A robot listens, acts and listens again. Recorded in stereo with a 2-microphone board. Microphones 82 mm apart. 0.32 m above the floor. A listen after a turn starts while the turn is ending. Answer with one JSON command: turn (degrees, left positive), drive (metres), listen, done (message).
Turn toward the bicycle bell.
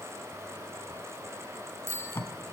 {"turn": -30}
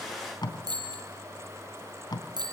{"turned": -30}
{"turn": -115}
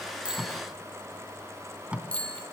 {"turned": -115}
{"turn": 15}
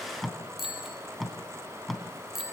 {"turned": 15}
{"done": "Facing the bicycle bell, over 4 m away."}